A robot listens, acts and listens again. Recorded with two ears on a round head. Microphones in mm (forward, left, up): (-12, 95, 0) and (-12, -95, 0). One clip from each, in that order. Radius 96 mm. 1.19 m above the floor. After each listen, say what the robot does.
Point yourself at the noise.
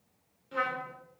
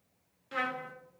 Turn 50° right.
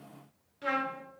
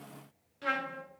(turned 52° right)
Turn 10° right.
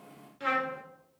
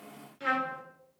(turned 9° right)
Facing the trumpet, 1 to 2 m away.